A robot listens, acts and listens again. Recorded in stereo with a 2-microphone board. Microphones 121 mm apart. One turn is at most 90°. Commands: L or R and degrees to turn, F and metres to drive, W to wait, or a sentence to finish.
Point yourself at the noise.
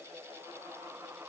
W
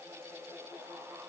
W
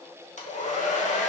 L70
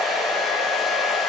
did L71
Found it: a hair dryer, straight ahead.